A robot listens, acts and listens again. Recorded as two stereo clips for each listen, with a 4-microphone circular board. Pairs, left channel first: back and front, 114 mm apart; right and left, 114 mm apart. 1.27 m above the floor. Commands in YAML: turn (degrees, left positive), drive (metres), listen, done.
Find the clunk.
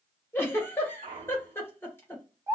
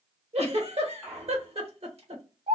turn: 10
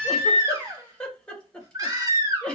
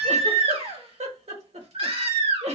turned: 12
done: "I heard a clunk from this way, but can't make it out now."